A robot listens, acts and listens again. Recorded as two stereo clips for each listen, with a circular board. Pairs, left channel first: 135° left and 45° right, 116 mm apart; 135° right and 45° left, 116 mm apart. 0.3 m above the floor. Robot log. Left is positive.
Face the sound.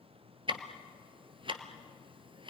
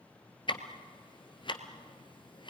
note: The ticking: 90° right.
cmd yaw -90
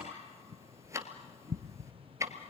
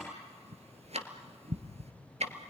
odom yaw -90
note: The ticking is now 20° left.
cmd yaw +20
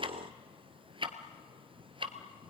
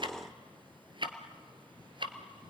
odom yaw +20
end: Facing the ticking.